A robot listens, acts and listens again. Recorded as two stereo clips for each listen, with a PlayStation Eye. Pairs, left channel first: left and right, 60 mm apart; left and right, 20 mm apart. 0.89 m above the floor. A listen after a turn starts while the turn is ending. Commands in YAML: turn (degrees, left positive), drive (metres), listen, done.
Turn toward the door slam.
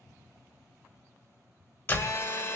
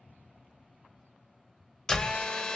turn: 35
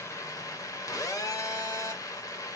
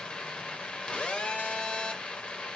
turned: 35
listen: true
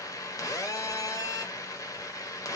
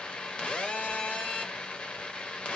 done: "I heard a door slam, but can't make it out now. It was about straight ahead or 110° left."